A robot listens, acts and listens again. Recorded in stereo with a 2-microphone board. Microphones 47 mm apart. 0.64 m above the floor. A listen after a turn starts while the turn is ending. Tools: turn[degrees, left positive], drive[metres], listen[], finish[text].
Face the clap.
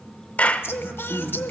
Thought: The clap: about 30° left or 150° left.
Action: turn[30]
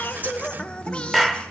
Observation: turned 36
Action: finish[Found it: a clap, straight ahead, 1 to 2 m away.]